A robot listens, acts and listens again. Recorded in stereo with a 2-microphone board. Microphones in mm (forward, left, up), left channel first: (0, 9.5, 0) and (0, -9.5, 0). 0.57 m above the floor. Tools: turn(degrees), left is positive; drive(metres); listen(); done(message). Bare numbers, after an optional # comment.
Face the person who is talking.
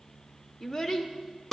# The child speaking: about 30° left or 150° left.
turn(30)
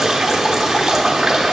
listen()
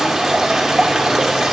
listen()
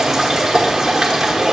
done("I heard a child speaking, but can't make it out now. It was about straight ahead or 120° left.")